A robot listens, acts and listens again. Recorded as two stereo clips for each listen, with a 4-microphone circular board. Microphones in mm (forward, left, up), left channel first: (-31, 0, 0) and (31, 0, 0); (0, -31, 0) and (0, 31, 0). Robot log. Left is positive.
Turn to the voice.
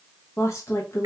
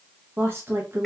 note: The woman speaking: 145° left.
cmd yaw +145
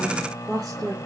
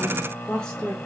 note: The woman speaking is now 10° right.
cmd yaw -10
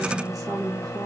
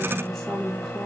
end: Found it: a woman speaking, straight ahead.